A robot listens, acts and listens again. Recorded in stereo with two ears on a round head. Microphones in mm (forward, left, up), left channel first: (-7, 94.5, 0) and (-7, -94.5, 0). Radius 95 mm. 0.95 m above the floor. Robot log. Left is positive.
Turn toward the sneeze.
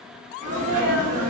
note: The sneeze: about 40° right or 140° right.
cmd yaw -40
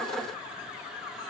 cmd idle
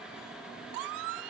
end: I heard a sneeze, but can't make it out now. It was about straight ahead or 100° right.